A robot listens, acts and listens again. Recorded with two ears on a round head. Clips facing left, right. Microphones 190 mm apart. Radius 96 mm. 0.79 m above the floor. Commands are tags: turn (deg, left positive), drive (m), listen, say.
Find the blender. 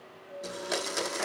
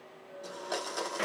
<turn deg="25"/>
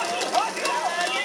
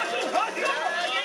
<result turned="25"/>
<listen/>
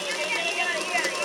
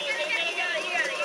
<listen/>
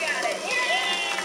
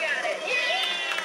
<say>I heard a blender, but can't make it out now. It was about straight ahead or 130° left.</say>